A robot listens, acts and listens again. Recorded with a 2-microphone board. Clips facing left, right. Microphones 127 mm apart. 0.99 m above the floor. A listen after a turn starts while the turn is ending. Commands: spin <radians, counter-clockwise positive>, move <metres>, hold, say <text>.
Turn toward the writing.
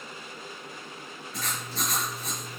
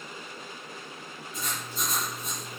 spin 1.31
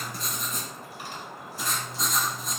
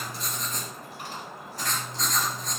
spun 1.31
spin 0.17
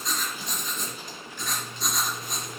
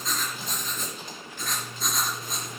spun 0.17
say Found it: writing, straight ahead, 2 to 4 m away.